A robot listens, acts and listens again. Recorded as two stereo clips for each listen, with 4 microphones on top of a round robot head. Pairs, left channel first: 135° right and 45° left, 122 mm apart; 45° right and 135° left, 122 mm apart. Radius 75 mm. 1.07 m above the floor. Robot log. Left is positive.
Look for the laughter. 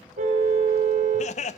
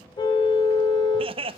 note: The laughter: 175° right.
cmd yaw -175
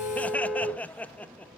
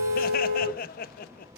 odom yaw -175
note: The laughter is now 55° right.
cmd yaw -55
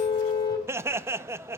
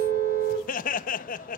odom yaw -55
note: The laughter is now 25° right.
cmd yaw -25
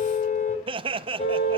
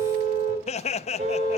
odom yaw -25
end: Facing the laughter.